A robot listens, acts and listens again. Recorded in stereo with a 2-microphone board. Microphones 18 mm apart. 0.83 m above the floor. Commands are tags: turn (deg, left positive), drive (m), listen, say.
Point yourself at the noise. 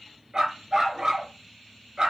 <turn deg="-35"/>
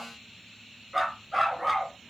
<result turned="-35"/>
<say>Facing the dog barking, 2 to 4 m away.</say>